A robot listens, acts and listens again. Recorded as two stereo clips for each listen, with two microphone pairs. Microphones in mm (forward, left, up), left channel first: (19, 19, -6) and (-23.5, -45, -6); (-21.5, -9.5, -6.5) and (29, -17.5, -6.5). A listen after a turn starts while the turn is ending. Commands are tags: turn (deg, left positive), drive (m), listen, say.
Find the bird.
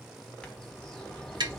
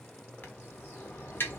<turn deg="135"/>
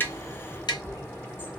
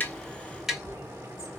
<say>Facing the bird, 1 to 2 m away.</say>